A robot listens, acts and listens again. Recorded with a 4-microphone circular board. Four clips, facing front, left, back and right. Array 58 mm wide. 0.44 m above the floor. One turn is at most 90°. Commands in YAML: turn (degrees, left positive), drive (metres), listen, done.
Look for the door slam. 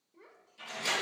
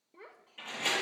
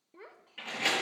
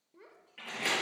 turn: -90
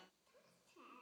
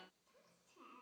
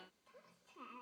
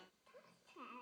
turn: -65
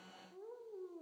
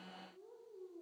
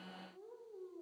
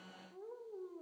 done: "Facing where the door slam came from. I can't hear it now."